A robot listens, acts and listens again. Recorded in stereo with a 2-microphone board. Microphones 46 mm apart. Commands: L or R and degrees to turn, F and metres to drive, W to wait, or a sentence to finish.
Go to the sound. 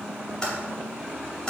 L15
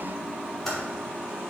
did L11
F1.0
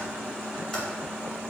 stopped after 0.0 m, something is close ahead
W
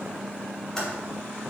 L10
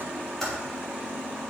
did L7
Blocked. The typing on a keyboard is further on, straight ahead.